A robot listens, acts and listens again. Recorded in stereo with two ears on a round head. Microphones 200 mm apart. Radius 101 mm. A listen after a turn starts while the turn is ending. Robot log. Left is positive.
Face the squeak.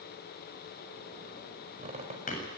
note: The squeak: about 30° right or 150° right.
cmd yaw -30
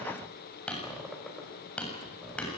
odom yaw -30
end: Found it: a squeak, straight ahead.